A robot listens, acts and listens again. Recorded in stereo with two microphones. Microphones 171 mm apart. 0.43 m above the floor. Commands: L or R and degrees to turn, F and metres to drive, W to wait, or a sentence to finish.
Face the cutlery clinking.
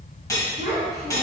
L20
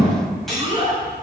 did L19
Facing the cutlery clinking.